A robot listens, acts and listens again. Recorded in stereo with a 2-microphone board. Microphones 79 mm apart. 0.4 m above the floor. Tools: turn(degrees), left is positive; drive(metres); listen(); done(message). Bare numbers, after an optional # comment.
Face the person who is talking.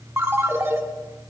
listen()
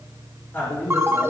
# The man speaking: about 30° left or 150° left.
turn(30)
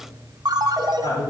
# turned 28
# So it is at 120° left.
turn(120)
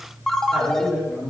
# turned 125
done("Facing the man speaking, over 4 m away.")